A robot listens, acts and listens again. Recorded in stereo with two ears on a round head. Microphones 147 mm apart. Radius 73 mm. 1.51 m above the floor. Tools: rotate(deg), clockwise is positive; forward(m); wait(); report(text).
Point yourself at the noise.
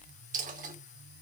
rotate(50)
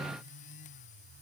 wait()
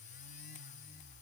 report("I heard a dropped coin, but can't make it out now. It was about straight ahead or 80° right.")